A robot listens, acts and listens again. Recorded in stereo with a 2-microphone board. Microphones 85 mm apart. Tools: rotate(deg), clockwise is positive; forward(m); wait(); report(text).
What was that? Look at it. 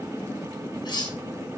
rotate(-60)
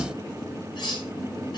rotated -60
rotate(-60)
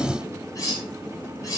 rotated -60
rotate(-45)
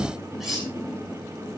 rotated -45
report("Found it: cutlery clinking, straight ahead.")